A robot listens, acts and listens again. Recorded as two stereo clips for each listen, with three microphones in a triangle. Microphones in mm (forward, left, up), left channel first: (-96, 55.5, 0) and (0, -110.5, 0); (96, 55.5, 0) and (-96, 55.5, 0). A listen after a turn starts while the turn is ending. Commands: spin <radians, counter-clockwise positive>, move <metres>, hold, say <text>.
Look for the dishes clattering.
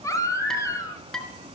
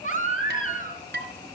spin -2.62
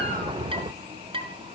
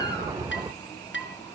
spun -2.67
say Facing the dishes clattering.